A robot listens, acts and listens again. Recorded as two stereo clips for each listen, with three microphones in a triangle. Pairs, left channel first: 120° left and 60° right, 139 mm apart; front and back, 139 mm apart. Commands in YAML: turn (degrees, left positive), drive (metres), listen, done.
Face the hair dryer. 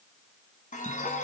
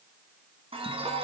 listen: true
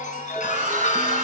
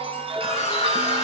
turn: -35
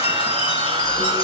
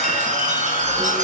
turn: -10
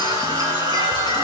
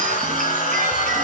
done: "Facing the hair dryer, 2 to 4 m away."